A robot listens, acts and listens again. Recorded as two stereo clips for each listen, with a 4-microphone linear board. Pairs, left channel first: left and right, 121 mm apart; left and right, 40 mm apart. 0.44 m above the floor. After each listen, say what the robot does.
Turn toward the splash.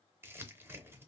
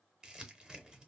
Keep listening.
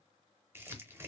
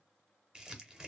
Keep listening.
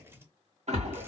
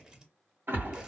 Turn 65° right.
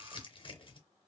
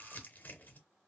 Keep listening.
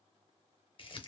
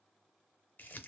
I heard a splash, but can't make it out now. It was about straight ahead or 50° right.